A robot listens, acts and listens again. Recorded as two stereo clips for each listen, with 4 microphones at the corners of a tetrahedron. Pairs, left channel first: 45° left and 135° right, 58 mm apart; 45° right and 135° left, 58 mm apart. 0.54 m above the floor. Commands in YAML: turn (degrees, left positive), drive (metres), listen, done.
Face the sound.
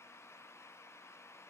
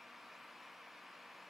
listen: true
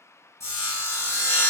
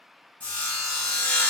turn: 20
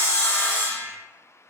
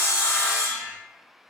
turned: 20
done: "Facing the sawing, 1 to 2 m away."